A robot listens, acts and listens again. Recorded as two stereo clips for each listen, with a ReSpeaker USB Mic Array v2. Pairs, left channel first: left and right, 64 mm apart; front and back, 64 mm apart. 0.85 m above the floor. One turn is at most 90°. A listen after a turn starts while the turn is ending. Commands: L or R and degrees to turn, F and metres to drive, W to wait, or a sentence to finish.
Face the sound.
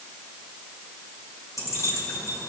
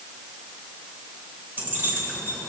L90
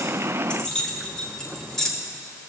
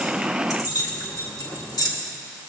L10
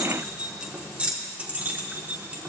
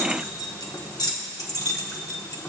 R25
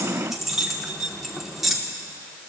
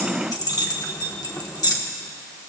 Facing the keys jangling.